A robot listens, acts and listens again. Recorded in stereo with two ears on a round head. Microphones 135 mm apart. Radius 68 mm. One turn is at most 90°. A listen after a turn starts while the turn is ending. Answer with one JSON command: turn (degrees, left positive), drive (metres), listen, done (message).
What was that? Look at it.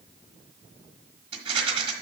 {"turn": -35}
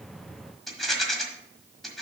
{"done": "Facing the rattle."}